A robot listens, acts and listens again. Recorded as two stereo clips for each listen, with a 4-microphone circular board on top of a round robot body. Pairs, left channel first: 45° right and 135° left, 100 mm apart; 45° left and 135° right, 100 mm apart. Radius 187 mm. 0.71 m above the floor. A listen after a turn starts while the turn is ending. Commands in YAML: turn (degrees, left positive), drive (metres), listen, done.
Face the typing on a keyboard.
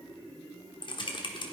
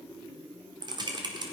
turn: -90
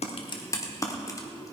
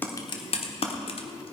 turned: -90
turn: 15
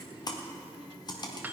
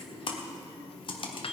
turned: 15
done: "Facing the typing on a keyboard."